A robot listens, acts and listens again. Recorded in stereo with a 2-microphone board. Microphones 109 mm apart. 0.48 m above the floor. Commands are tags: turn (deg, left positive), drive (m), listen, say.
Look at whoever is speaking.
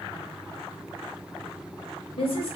<turn deg="60"/>
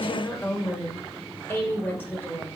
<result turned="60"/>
<turn deg="20"/>
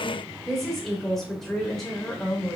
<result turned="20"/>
<say>Facing the woman speaking, 1 to 2 m away.</say>